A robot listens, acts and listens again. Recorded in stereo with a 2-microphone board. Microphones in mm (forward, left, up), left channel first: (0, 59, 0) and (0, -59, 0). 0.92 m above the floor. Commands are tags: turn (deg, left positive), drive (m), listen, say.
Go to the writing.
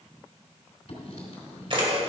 <turn deg="65"/>
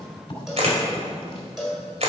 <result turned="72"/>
<turn deg="40"/>
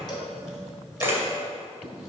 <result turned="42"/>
<drive m="1.0"/>
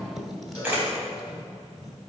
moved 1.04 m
<drive m="1.0"/>
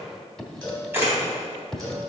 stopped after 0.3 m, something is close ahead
<say>Arrived at the writing, straight ahead.</say>